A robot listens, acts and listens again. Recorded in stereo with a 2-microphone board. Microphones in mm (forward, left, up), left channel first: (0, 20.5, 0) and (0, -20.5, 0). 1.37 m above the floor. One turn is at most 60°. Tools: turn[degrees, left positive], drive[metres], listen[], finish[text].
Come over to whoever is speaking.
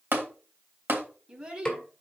Thought: The child speaking: about 25° right or 155° right.
Action: turn[-25]
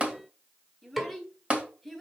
Action: drive[1.0]
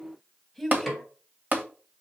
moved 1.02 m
Action: drive[1.0]
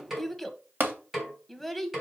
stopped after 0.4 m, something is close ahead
Action: finish[Arrived at the child speaking, straight ahead.]